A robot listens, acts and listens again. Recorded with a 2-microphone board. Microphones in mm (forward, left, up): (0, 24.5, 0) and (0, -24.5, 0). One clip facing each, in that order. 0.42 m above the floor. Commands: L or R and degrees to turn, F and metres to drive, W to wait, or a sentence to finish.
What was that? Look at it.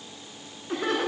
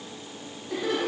L55
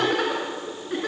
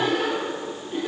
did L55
L65
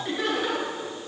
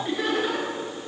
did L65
Facing the laughter.